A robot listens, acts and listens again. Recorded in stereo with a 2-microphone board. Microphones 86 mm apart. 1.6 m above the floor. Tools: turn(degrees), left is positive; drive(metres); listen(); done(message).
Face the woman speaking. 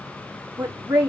turn(degrees=-20)
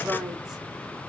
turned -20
done("Facing the woman speaking.")